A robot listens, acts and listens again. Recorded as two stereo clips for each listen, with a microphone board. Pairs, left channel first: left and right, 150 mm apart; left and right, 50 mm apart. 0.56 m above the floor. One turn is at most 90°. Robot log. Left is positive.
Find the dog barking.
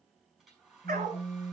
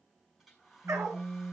cmd yaw -90
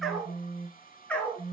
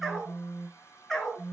note: So it is at 10° left.
cmd yaw +10
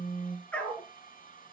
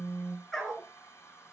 note: The dog barking is now 10° left.
cmd yaw +10
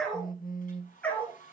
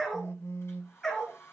note: The dog barking is now 10° left.
cmd yaw +10
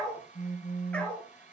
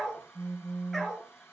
note: The dog barking is now 10° left.
cmd yaw +10
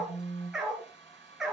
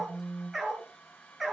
end: Found it: a dog barking, straight ahead, 2 to 4 m away.